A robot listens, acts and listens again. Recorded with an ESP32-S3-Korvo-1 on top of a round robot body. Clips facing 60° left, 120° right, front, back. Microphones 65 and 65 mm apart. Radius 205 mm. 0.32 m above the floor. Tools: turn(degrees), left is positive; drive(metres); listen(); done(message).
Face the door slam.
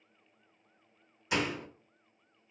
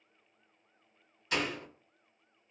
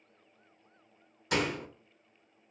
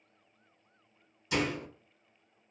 turn(degrees=-15)
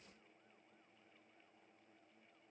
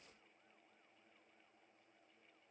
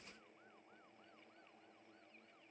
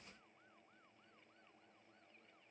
done("I heard a door slam from this way, but can't make it out now.")